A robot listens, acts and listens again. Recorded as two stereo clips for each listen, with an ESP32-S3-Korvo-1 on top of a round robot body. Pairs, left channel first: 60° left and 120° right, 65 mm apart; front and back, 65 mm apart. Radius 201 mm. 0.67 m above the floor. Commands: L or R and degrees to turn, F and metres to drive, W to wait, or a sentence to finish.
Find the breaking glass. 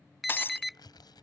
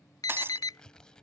L120
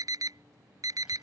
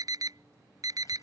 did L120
Facing where the breaking glass came from. I can't hear it now.